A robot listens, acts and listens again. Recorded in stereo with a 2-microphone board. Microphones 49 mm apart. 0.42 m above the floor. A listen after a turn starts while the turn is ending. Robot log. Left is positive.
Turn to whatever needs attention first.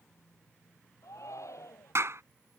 cmd yaw +90
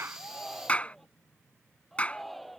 end: Facing the shout.